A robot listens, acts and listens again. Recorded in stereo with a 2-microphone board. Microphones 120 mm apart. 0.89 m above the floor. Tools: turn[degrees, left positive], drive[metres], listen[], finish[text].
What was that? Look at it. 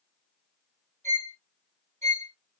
Action: turn[-90]
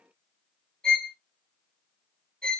Action: finish[Facing the violin, under 1 m away.]